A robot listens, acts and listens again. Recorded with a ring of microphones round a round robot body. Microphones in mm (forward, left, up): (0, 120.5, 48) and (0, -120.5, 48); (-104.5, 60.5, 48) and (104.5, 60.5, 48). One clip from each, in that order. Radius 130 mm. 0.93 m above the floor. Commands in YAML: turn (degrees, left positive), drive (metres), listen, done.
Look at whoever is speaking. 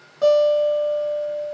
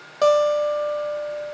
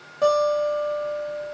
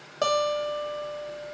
listen: true
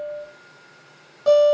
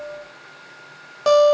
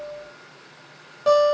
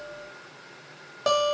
listen: true
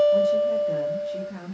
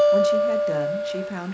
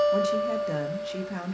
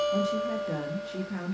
turn: -120
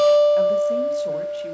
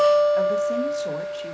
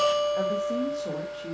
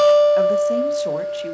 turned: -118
listen: true
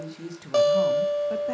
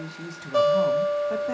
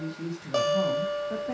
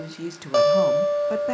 done: "Found it: a woman speaking, straight ahead, under 1 m away."